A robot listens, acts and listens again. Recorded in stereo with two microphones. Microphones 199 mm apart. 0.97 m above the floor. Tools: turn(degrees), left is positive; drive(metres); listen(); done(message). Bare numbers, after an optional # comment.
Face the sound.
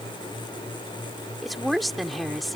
turn(30)
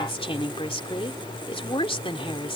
# So it is at 150° left.
turn(150)
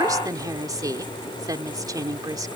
# The woman speaking is now 20° right.
turn(-20)
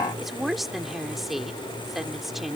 done("Facing the woman speaking.")